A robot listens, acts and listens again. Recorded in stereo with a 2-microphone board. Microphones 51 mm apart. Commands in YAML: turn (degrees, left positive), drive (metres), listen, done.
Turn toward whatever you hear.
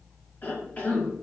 turn: 35
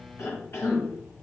turn: 100
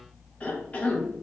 turn: 30
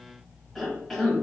done: "Facing the cough, 1 to 2 m away."